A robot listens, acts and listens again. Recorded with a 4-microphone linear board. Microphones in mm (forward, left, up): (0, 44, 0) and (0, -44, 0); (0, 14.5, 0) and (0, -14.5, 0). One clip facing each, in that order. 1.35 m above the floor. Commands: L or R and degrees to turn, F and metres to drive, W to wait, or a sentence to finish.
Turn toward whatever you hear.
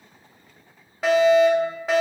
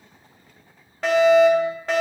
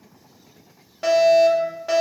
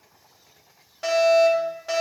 L30
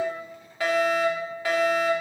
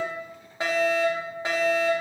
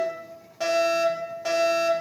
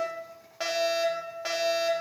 R25
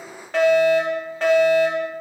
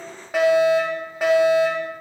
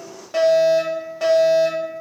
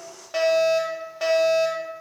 R10
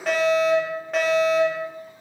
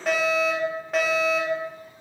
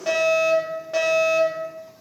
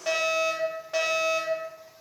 Facing the fire alarm.